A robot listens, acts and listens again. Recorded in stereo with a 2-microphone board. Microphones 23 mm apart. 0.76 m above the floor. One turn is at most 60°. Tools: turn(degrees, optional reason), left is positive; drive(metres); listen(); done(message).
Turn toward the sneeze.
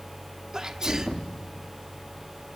turn(degrees=-25, reason="The sneeze: about 25° right or 155° right.")
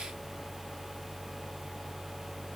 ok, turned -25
listen()
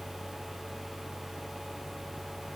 done("I heard a sneeze, but can't make it out now. It was about straight ahead or 130° right.")